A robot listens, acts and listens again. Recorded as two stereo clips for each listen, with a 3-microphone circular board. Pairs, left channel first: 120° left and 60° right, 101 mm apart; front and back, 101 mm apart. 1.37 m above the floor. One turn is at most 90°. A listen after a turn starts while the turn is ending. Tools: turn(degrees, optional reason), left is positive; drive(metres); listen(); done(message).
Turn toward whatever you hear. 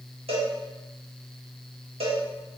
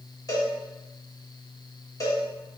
turn(degrees=-55, reason="The cowbell: 55° right.")
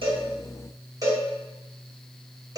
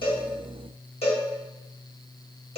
done("Found it: a cowbell, straight ahead, 1 to 2 m away.")